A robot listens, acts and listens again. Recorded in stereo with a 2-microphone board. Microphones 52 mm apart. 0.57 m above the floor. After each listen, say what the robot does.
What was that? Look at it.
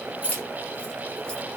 Turn 30° left.
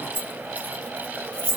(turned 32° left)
Turn 25° left.
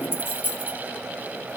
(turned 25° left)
Turn 40° left.
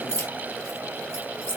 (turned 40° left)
Turn 120° left.
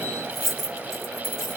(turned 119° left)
Facing the keys jangling, 2 to 4 m away.